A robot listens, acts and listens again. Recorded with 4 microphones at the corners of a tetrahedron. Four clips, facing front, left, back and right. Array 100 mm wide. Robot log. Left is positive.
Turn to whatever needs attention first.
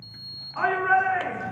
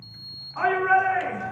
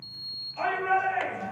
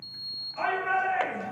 note: The shout: 35° left.
cmd yaw +35
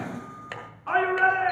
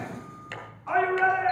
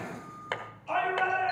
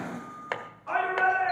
end: Found it: a shout, straight ahead.